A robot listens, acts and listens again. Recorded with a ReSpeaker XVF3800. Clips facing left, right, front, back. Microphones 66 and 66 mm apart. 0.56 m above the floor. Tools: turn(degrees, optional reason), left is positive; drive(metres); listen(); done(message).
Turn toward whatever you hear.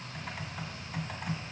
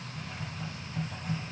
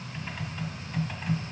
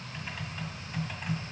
turn(degrees=95, reason="The typing on a keyboard: 95° left.")
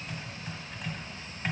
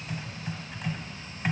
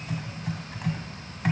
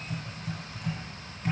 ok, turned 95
done("Facing the typing on a keyboard, 1 to 2 m away.")